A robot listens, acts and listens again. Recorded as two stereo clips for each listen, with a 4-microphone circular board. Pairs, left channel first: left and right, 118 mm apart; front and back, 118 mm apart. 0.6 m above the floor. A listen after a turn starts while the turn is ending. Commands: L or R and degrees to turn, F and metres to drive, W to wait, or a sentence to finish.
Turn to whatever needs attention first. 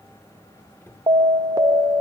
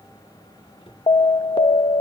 R35
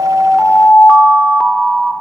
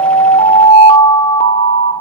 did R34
Found it: an alarm, straight ahead.